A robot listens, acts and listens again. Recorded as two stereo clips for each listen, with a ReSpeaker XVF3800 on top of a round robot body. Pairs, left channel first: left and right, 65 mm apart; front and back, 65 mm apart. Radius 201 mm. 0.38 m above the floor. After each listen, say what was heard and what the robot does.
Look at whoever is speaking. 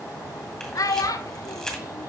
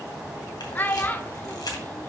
The child speaking: 60° left. Turn 60° left.
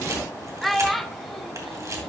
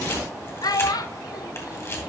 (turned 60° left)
Facing the child speaking, under 1 m away.